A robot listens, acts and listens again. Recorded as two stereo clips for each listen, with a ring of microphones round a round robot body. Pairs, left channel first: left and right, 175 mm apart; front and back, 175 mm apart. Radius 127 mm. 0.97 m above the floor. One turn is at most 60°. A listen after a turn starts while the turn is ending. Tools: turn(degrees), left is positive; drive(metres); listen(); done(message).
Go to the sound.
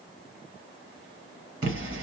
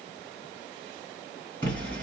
turn(degrees=-60)
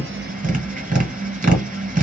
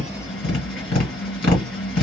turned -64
turn(degrees=-55)
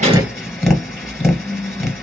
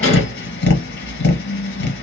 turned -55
drive(metres=1.0)
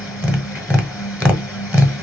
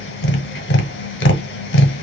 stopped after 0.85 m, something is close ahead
done("I am next to the tapping.")